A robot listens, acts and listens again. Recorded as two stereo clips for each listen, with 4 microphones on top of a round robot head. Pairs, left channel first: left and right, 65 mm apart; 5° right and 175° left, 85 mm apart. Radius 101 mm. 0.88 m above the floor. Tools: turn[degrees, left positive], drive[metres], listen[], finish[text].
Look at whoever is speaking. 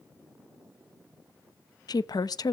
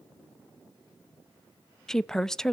Thought: The woman speaking: 80° left.
Action: turn[80]
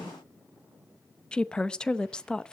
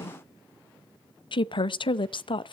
Thought: The woman speaking is now 10° left.
Action: turn[10]
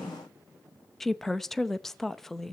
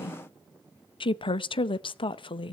Action: finish[Facing the woman speaking.]